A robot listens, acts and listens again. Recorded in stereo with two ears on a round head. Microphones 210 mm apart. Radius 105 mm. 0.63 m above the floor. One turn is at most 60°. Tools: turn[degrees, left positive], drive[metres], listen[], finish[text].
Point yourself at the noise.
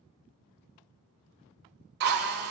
Thought: The drill: about 45° right or 135° right.
Action: turn[-45]
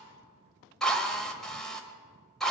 Action: finish[Found it: a drill, straight ahead, 1 to 2 m away.]